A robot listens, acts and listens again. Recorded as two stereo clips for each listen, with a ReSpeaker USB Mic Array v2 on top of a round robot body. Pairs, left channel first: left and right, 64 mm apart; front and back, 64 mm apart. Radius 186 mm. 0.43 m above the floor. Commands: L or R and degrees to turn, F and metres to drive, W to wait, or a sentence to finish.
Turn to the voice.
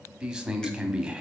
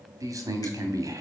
R170
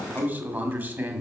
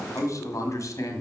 R30
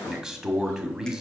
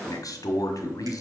R10
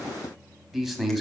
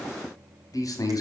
Found it: a man speaking, straight ahead.